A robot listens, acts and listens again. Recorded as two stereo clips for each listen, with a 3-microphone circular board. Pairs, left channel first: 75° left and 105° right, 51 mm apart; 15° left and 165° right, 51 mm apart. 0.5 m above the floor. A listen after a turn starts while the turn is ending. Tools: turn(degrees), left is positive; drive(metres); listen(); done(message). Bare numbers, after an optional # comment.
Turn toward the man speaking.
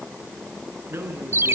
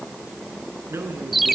# The man speaking: 140° right.
turn(-140)
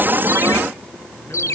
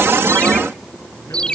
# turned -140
listen()
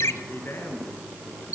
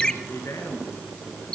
# The man speaking is now 35° left.
turn(35)
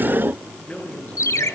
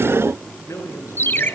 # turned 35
# The man speaking is now 15° left.
turn(15)
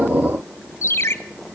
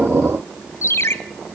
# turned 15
listen()
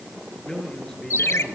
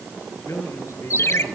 done("Found it: a man speaking, straight ahead, over 4 m away.")